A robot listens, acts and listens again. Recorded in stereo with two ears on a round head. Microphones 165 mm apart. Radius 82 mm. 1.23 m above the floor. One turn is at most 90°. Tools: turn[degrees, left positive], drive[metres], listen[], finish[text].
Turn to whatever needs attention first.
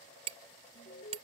Thought: The alarm: about 45° left or 135° left.
Action: turn[45]
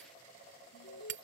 Thought: So it is at 90° left.
Action: turn[90]
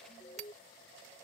Thought: The alarm is now 25° left.
Action: turn[25]
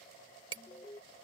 Thought: The alarm is now 20° left.
Action: turn[20]
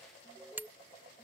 Action: finish[Found it: an alarm, straight ahead.]